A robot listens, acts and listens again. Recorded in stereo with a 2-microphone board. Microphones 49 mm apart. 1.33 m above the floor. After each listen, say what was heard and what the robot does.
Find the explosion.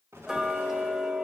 Turn 90° right.
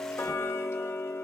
I heard an explosion from this way, but can't make it out now.